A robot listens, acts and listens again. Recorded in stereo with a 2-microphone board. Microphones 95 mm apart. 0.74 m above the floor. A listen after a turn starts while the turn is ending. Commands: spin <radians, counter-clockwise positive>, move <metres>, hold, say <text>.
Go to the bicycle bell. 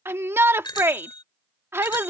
spin 0.96
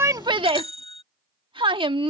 spin 1.31
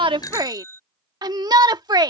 spin 0.52
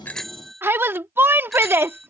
move 1.0
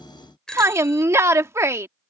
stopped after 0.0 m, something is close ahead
spin 0.17
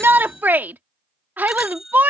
say Blocked. The bicycle bell is further on, straight ahead.